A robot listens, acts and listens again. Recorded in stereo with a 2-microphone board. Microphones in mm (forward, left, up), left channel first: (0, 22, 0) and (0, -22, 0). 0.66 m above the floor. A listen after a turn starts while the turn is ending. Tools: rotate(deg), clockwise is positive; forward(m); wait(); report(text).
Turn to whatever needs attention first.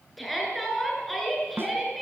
rotate(-30)
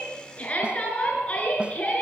rotate(-150)
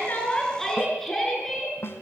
rotate(-10)
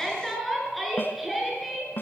report("Found it: a shout, straight ahead, over 4 m away.")